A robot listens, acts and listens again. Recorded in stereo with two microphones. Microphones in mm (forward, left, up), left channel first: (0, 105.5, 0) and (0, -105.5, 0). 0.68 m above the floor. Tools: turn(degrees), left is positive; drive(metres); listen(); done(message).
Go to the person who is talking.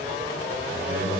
turn(degrees=-70)
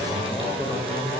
drive(metres=1.0)
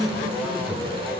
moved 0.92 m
drive(metres=1.0)
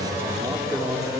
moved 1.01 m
turn(degrees=-15)
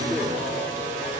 drive(metres=1.0)
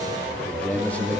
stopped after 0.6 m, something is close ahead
turn(degrees=10)
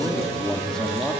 done("Arrived at the man speaking, straight ahead.")